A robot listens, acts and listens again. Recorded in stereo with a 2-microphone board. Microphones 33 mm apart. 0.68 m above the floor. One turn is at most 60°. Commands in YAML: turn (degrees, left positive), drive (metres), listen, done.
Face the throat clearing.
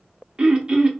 turn: -25
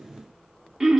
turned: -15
turn: -15
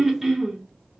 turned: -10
done: "Facing the throat clearing."